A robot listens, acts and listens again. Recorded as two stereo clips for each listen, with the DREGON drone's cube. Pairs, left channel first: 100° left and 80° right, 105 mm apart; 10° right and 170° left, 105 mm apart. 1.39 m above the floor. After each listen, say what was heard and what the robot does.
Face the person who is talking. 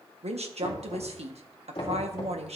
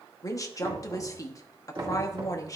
The woman speaking: 70° right. Turn 70° right.
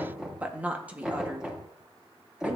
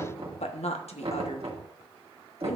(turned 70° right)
Found it: a woman speaking, straight ahead.